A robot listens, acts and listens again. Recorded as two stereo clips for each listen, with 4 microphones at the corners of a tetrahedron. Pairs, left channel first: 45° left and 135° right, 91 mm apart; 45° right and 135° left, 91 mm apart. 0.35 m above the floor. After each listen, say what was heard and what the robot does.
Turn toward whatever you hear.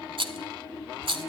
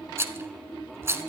The rattle: 160° right. Turn 160° right.
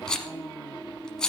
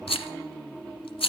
The rattle is now 35° right. Turn 35° right.
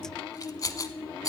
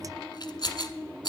Facing the rattle.